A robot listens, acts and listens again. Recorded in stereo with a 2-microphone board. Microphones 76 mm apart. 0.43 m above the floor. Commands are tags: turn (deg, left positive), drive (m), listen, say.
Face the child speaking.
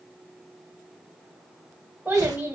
<turn deg="-25"/>
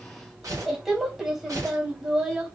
<say>Found it: a child speaking, straight ahead.</say>